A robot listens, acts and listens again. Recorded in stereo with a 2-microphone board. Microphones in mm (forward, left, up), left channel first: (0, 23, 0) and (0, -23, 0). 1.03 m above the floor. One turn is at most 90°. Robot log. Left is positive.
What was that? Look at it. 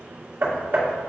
note: The hammering: about 65° right or 115° right.
cmd yaw -65
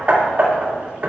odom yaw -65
note: So it is at 45° right.
cmd yaw -45
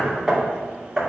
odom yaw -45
end: Found it: hammering, straight ahead.